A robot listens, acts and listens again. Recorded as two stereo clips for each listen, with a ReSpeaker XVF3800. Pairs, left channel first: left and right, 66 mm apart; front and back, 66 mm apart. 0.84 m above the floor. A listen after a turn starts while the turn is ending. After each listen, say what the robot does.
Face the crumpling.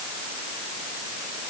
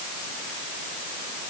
Keep listening.
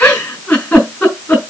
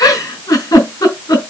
Keep listening.
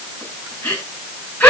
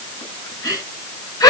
I can't make out crumpling, only a giggle.